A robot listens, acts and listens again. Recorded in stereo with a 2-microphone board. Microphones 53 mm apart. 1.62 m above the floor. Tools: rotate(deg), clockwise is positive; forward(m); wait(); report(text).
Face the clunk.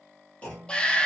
rotate(-25)
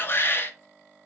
wait()
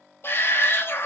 report("I heard a clunk, but can't make it out now. It was about straight ahead or 130° left.")